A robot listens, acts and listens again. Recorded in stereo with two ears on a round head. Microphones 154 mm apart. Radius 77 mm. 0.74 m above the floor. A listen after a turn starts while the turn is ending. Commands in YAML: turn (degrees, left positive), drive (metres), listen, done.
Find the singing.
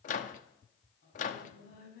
turn: 65
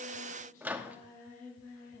turn: 45
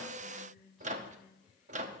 done: "Facing the singing."